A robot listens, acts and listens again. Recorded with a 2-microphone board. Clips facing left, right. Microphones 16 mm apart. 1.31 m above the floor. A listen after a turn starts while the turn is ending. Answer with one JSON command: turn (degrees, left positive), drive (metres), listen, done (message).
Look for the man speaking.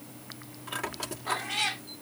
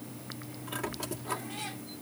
{"listen": true}
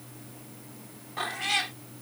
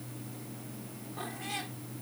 {"listen": true}
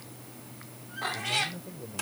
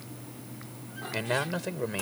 {"turn": -55}
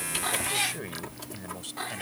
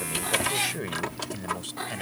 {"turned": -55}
{"done": "Facing the man speaking."}